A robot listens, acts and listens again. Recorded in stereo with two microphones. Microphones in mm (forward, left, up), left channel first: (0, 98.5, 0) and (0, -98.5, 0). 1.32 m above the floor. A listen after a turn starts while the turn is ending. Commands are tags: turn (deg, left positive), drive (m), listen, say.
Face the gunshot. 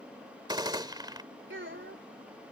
<turn deg="-20"/>
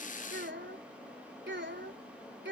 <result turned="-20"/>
<listen/>
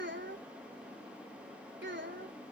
<say>I heard a gunshot, but can't make it out now. It was about straight ahead or 140° right.</say>